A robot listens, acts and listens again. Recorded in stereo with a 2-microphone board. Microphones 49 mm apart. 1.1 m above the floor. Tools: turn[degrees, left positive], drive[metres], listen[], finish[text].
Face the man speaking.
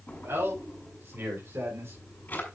Thought: The man speaking: about 55° right or 125° right.
Action: turn[-55]
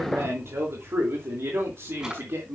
Thought: So it is at 60° right.
Action: turn[-60]
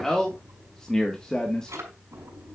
Thought: The man speaking is now 15° left.
Action: turn[15]
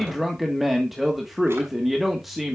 Action: finish[Facing the man speaking.]